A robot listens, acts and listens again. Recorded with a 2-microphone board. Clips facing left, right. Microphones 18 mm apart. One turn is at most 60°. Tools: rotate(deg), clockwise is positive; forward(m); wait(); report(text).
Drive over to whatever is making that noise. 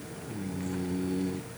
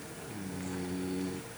wait()
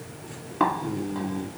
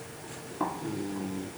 rotate(-55)
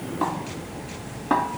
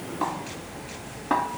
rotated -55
forward(1.0)
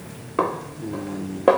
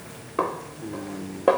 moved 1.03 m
rotate(-10)
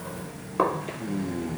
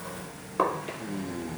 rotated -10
forward(1.0)
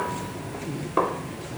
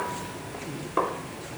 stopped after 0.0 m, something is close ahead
rotate(-10)
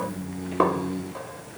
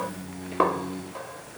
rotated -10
report("I am next to the snare drum.")